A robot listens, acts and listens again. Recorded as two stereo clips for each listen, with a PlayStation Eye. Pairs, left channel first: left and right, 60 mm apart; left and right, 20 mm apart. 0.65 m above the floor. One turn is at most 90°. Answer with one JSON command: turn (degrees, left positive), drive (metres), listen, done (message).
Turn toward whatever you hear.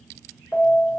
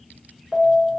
{"turn": 65}
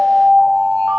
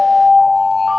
{"turn": 20}
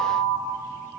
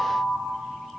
{"done": "Found it: an alarm, straight ahead."}